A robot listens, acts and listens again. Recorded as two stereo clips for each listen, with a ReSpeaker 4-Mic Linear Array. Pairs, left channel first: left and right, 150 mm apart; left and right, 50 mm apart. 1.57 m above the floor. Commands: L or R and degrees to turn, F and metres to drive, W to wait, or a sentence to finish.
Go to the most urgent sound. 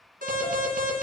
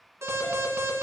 R90
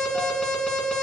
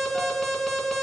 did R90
F1.0
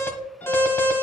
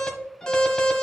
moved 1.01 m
L15
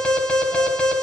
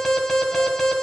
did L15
F1.0
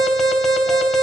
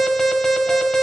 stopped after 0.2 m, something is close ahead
Arrived at the alarm, straight ahead.